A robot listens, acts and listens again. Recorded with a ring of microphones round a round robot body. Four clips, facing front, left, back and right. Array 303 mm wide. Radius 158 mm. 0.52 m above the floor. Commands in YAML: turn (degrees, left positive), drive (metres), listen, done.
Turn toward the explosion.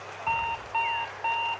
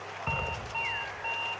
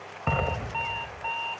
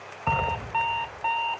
turn: -160
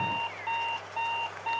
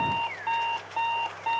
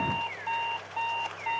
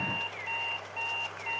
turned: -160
done: "Facing where the explosion came from. I can't hear it now."